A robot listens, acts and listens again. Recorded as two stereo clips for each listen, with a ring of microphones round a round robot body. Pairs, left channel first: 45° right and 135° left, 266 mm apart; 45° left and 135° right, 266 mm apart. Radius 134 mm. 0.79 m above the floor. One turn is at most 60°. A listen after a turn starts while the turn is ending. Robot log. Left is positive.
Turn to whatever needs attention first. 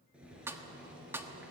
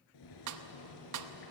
cmd idle
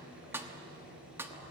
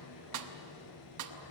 cmd idle
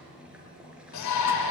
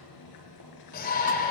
note: The shout: 15° right.
cmd yaw -15
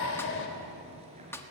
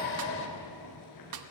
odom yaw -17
end: Found it: a shout, straight ahead.